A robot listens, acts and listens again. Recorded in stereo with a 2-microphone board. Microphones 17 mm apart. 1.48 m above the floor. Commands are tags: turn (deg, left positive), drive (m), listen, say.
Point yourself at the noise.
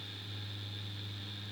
<listen/>
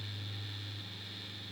<listen/>
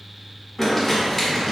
<turn deg="30"/>
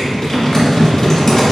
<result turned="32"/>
<turn deg="140"/>
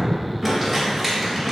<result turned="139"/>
<say>Found it: crumpling, straight ahead.</say>